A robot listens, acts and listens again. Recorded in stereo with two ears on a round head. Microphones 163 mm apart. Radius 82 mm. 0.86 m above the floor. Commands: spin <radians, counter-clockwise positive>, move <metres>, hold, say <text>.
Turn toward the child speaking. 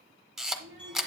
spin -0.79
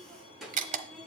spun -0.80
say Found it: a child speaking, straight ahead.